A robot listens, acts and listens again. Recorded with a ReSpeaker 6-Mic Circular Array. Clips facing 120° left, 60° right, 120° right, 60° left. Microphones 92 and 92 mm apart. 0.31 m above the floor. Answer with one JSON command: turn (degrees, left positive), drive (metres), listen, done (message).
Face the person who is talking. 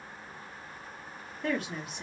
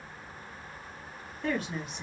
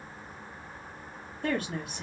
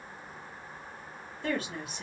{"turn": -155}
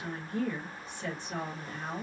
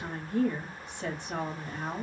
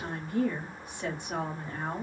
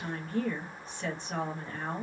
{"turn": -45}
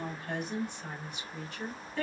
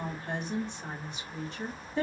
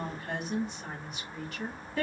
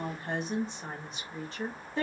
{"done": "Facing the woman speaking."}